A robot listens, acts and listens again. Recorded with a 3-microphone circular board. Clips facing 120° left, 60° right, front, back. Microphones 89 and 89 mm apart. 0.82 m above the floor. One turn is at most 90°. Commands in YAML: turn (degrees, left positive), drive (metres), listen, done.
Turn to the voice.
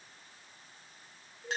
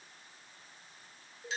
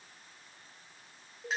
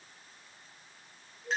listen: true
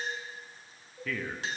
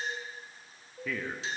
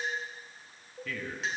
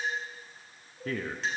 turn: -90
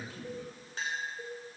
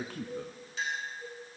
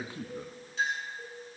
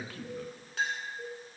turn: -65
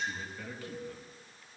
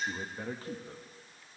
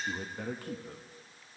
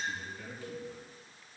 turn: -10
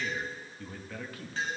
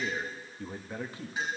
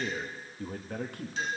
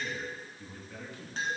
done: "Found it: a man speaking, straight ahead, under 1 m away."